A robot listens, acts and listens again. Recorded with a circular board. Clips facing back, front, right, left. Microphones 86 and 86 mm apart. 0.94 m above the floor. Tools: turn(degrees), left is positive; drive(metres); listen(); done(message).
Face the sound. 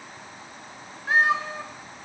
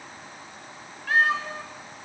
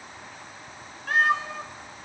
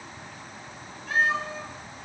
turn(degrees=-115)
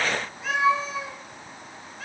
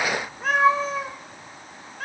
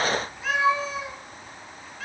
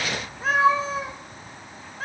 turn(degrees=40)
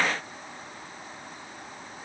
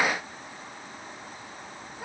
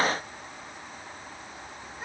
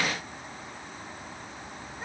done("Facing the cat meowing.")